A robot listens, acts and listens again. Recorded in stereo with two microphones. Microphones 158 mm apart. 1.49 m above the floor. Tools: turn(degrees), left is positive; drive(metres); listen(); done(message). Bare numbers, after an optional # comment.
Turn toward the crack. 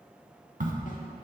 # The crack: about 55° right or 125° right.
turn(-55)
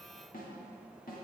listen()
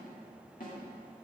done("I heard a crack, but can't make it out now. It was about straight ahead or 70° right.")